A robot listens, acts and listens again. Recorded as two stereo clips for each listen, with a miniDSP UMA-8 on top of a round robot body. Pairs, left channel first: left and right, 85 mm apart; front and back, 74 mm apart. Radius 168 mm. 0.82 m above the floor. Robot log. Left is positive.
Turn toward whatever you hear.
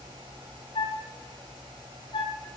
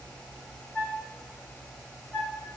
note: The flute: 70° left.
cmd yaw +70
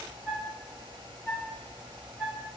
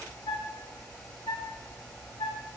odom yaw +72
end: Facing the flute, 2 to 4 m away.